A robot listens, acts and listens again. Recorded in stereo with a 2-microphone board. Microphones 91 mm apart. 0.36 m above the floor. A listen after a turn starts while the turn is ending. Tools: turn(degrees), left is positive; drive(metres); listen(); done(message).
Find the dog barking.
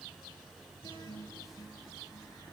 listen()
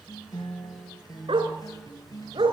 turn(degrees=-90)
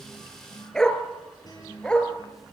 turn(degrees=10)
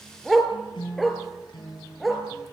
done("Found it: a dog barking, straight ahead.")